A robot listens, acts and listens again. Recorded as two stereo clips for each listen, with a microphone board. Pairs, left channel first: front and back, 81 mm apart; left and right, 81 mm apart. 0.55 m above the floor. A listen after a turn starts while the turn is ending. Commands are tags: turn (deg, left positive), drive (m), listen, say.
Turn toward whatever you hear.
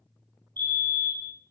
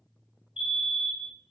<turn deg="-165"/>
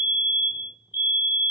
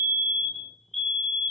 <turn deg="10"/>
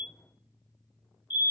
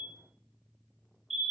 <say>Facing the fire alarm.</say>